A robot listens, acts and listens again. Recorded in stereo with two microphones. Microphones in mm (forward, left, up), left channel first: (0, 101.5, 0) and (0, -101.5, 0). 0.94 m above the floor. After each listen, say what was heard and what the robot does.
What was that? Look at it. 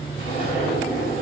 The zipper: about 30° left or 150° left. Turn 30° left.
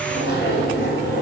So it is at 120° left. Turn 120° left.
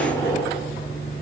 The zipper is now 10° left. Turn 10° left.
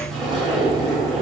Facing the zipper.